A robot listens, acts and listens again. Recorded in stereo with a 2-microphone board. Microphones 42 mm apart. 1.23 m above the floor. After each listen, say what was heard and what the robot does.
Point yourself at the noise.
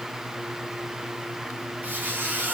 The squeak: about 50° right or 130° right. Turn 50° right.
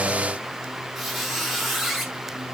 Found it: a squeak, straight ahead.